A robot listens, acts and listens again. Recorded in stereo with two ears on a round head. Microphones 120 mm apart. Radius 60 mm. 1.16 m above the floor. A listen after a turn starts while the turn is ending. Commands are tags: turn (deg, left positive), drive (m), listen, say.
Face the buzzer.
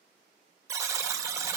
<turn deg="-20"/>
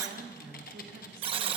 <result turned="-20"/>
<turn deg="-135"/>
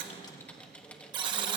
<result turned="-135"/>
<turn deg="-35"/>
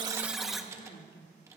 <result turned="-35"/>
<say>Facing the buzzer.</say>